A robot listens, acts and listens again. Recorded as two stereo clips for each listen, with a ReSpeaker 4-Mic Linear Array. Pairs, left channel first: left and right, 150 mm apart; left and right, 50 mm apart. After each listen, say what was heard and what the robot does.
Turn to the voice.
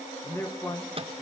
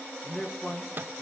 The man speaking: about 20° left or 160° left. Turn 20° left.
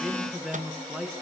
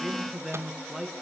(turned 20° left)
Found it: a man speaking, straight ahead, 2 to 4 m away.